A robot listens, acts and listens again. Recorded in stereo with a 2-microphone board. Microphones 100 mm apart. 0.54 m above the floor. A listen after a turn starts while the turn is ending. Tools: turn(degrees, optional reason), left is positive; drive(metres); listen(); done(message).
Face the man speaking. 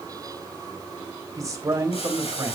turn(degrees=-30, reason="The man speaking: about 30° right or 150° right.")
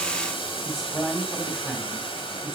done("Found it: a man speaking, straight ahead, over 4 m away.")